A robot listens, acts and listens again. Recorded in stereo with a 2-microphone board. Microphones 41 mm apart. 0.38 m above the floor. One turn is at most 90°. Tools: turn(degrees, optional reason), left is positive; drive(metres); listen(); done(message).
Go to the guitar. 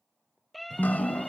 turn(degrees=-55, reason="The guitar: about 55° right or 125° right.")
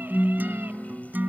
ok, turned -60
turn(degrees=-60, reason="So it is at 60° right.")
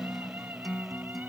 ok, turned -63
drive(metres=1.0)
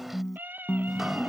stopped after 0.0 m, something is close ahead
done("Blocked. The guitar is further on, straight ahead.")